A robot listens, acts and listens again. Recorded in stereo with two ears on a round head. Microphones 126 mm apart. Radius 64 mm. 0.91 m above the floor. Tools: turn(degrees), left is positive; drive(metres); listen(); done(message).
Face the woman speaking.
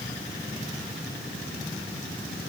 listen()
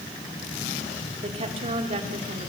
turn(degrees=-45)
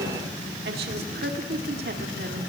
turn(degrees=-85)
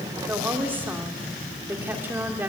turn(degrees=-15)
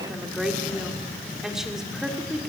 done("Facing the woman speaking, 2 to 4 m away.")